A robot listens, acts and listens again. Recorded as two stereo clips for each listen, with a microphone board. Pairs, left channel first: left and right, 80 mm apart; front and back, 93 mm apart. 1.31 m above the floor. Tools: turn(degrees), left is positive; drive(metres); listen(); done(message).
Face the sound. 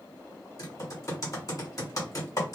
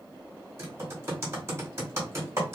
turn(degrees=130)
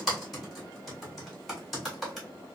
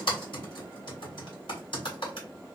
done("Found it: typing on a keyboard, straight ahead, 1 to 2 m away.")